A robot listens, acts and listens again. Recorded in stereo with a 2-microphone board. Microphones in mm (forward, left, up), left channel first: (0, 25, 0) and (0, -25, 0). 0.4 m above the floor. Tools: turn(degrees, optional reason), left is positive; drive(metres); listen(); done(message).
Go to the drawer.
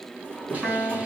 turn(degrees=25, reason="The drawer: about 25° left or 155° left.")
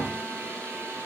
turn(degrees=135, reason="So it is at 135° left.")
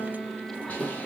turn(degrees=-20, reason="The drawer is now 20° right.")
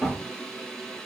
drive(metres=1.0)
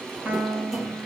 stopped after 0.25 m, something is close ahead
listen()
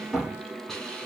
done("Something is in my way. I am facing the drawer but have not reached it.")